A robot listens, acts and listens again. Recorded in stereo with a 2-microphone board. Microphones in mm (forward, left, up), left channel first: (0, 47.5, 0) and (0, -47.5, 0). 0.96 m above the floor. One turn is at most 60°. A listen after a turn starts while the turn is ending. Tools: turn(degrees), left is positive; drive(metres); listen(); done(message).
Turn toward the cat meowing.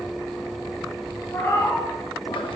turn(degrees=25)
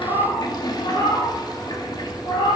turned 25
turn(degrees=60)
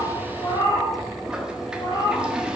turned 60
turn(degrees=45)
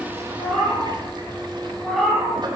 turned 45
done("Facing the cat meowing, over 4 m away.")